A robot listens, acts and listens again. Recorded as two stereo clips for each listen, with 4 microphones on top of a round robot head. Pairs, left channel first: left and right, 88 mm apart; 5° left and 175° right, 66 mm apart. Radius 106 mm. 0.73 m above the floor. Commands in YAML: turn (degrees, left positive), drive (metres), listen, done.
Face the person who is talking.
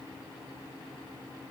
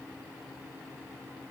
listen: true
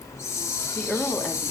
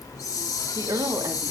turn: 170
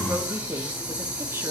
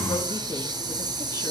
listen: true
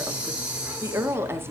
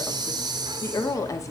turn: -30
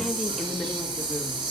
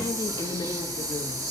listen: true
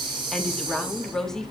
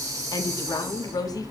done: "Found it: a woman speaking, straight ahead."